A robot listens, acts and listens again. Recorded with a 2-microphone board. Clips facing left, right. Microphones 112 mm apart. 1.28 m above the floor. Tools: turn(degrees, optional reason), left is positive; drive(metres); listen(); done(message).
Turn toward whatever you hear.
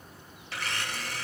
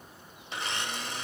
turn(degrees=-20, reason="The blender: about 20° right or 160° right.")
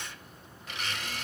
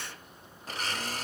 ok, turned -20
turn(degrees=-135, reason="So it is at 135° right.")
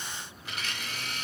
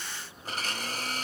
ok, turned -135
turn(degrees=-45, reason="The blender is now 45° right.")
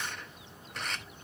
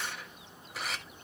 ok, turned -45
done("Found it: a blender, straight ahead.")